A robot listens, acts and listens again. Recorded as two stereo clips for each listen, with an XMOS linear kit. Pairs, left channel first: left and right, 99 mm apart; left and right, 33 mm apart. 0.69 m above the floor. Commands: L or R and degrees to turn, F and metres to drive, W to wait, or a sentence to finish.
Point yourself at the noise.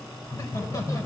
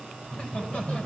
L35
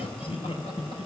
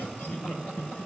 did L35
L105
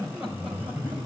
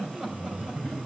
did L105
R20
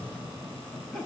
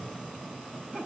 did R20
Facing the laughter.